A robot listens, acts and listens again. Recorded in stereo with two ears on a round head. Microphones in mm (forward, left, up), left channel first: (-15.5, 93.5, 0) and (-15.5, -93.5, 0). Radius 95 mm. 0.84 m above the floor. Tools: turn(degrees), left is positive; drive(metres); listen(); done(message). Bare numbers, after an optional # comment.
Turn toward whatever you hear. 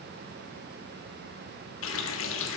# The running tap: about 65° left or 115° left.
turn(65)
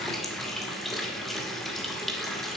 done("Found it: a running tap, straight ahead.")